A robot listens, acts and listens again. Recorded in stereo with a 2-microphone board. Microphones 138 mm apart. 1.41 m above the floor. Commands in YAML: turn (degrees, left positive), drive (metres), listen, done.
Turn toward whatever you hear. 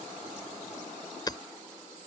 turn: 30
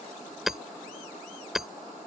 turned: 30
done: "Found it: hammering, straight ahead."